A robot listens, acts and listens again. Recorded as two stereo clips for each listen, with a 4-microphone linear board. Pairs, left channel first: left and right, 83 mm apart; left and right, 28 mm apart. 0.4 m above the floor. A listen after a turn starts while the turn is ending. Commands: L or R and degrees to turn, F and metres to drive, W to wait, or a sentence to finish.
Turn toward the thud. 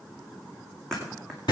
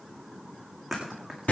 L30
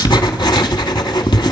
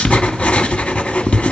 W
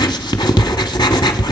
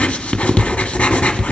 I heard a thud, but can't make it out now. It was about 25° right or 145° left.